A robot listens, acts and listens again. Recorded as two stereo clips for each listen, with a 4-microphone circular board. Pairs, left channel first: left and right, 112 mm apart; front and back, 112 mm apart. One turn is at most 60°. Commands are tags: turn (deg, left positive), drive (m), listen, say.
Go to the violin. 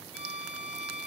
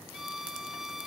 <turn deg="-60"/>
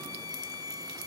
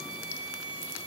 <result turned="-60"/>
<turn deg="-35"/>
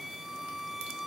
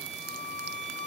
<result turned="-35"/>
<drive m="1.0"/>
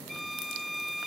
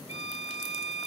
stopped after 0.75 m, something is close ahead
<say>Blocked. The violin is further on, straight ahead.</say>